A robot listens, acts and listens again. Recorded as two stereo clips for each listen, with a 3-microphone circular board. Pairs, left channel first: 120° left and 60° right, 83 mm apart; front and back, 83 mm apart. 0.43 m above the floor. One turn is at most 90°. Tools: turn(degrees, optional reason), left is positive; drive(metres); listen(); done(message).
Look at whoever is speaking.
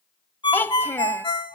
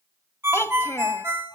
turn(degrees=55, reason="The child speaking: 55° left.")
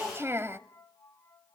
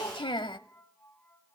done("Found it: a child speaking, straight ahead, 1 to 2 m away.")